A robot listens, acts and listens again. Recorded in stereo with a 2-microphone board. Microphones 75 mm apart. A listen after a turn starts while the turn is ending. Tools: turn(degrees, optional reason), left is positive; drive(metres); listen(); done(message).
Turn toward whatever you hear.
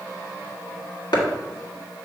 turn(degrees=65, reason="The chopping: about 65° left or 115° left.")
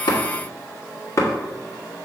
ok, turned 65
turn(degrees=45, reason="So it is at 45° left.")
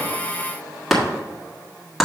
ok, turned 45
done("Facing the chopping.")